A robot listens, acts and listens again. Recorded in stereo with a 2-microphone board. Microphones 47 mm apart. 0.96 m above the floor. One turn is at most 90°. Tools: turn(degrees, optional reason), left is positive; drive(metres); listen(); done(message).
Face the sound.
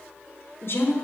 turn(degrees=50, reason="The woman speaking: about 50° left or 130° left.")
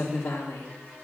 turn(degrees=80, reason="So it is at 80° left.")
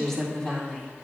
turn(degrees=15, reason="The woman speaking is now 15° left.")
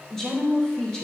turn(degrees=15, reason="The woman speaking is now 15° left.")
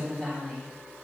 turn(degrees=10, reason="The woman speaking is now 10° left.")
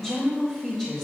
turn(degrees=10, reason="The woman speaking is now 10° left.")
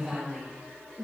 done("Facing the woman speaking, 2 to 4 m away.")